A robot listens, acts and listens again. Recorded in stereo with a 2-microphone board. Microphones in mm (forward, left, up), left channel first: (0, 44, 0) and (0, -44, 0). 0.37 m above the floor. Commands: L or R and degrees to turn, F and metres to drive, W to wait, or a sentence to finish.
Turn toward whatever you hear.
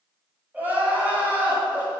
R20
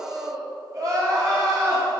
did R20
R140
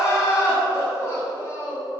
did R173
L35
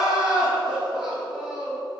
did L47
R10
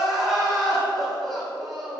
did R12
Found it: crying, straight ahead.